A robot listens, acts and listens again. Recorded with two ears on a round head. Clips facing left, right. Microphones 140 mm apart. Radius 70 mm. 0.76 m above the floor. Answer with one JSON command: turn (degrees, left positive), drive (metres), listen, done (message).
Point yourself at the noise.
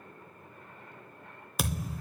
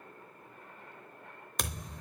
{"turn": 30}
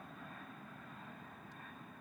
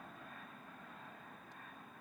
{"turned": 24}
{"listen": true}
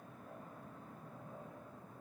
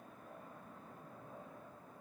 {"done": "I heard a thud, but can't make it out now. It was about 20° right or 150° left."}